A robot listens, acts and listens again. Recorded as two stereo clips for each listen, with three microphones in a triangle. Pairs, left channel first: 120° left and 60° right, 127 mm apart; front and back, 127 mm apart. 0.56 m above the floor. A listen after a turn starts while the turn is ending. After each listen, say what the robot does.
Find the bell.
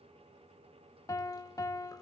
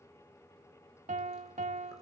Keep listening.
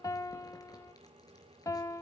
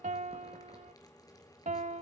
Keep listening.
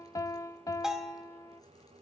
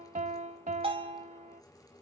Turn 145° right.
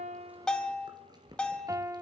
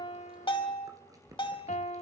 Turn 40° left.
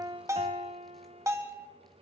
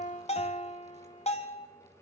Facing the bell.